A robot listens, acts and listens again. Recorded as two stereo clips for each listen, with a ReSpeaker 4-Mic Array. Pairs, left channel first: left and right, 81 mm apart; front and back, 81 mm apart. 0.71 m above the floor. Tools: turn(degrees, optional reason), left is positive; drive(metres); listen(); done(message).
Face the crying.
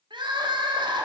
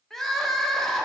turn(degrees=-85, reason="The crying: 85° right.")
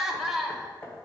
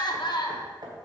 done("Facing the crying, under 1 m away.")